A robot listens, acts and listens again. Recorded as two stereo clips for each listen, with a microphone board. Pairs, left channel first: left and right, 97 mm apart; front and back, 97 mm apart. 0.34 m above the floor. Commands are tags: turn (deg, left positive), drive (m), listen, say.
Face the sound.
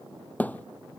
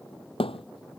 <turn deg="15"/>
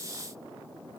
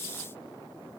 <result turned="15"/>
<say>I heard a thud from this way, but can't make it out now.</say>